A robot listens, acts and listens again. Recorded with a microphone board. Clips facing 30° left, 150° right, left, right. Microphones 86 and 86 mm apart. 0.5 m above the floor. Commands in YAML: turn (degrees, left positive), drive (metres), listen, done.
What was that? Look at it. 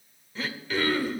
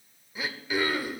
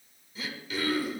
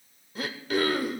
turn: -75
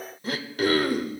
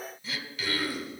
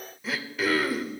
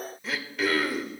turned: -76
done: "Facing the throat clearing, under 1 m away."